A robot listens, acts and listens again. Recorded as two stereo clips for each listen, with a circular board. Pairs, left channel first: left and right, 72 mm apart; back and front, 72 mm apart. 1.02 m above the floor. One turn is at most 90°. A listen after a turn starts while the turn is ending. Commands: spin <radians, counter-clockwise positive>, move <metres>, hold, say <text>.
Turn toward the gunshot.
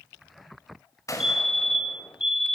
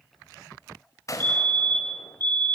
spin 1.57
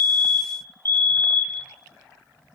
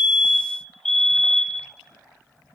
spin 0.79
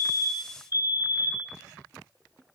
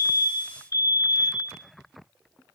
say I heard a gunshot from this way, but can't make it out now.